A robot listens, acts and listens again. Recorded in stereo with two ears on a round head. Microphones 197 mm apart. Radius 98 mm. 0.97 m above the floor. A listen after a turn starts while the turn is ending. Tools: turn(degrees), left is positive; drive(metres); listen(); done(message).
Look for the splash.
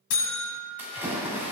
turn(degrees=-30)
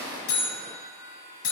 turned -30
listen()
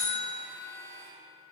done("I heard a splash, but can't make it out now. It was about 20° left or 140° right.")